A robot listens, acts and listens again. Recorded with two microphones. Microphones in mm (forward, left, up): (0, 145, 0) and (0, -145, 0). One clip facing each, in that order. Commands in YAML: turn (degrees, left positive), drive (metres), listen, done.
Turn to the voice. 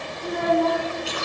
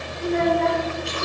turn: -90
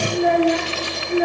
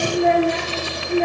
done: "Facing the child speaking."